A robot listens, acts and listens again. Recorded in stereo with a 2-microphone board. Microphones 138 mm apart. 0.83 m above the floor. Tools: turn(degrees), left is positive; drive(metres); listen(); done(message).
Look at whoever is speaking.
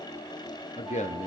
turn(degrees=55)
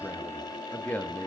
turn(degrees=10)
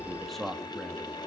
done("Facing the man speaking, 1 to 2 m away.")